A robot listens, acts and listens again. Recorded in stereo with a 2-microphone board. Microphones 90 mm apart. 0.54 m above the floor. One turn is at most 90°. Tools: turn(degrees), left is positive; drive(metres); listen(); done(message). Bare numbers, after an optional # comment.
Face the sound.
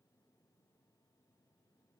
listen()
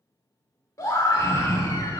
# The scream: about 35° left or 145° left.
turn(35)
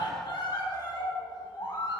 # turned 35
# So it is at 105° left.
turn(90)
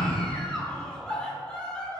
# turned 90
# The scream is now 10° left.
turn(10)
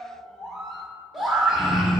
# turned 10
done("Facing the scream.")